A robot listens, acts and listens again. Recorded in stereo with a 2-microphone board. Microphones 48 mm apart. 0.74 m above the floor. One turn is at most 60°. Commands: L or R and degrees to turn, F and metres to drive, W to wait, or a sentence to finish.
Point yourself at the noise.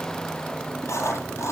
L60
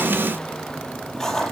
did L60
L10
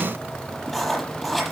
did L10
Facing the writing.